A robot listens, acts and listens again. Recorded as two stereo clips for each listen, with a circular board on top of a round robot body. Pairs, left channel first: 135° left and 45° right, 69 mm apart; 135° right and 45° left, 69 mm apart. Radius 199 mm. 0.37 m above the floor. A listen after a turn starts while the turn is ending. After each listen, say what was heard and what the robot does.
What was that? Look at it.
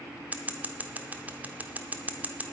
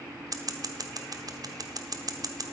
The scissors: 20° left. Turn 20° left.
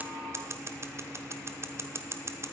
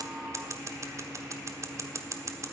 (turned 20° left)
Facing the scissors.